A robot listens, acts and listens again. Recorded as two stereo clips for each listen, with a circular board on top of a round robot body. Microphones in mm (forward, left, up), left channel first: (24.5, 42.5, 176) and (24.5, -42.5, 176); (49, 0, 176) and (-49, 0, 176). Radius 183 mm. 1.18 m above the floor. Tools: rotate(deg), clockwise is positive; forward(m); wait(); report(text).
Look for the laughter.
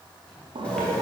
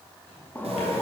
rotate(70)
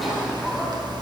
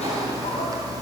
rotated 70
report("Facing the laughter, 2 to 4 m away.")